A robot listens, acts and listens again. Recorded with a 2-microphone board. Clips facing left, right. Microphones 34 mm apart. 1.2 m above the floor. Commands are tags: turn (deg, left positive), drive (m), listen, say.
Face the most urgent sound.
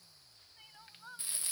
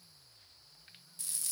<turn deg="90"/>
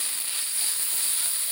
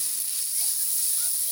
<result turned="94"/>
<listen/>
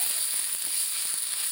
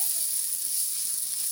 <listen/>
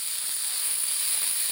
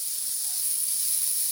<say>Facing where the crying came from. I can't hear it now.</say>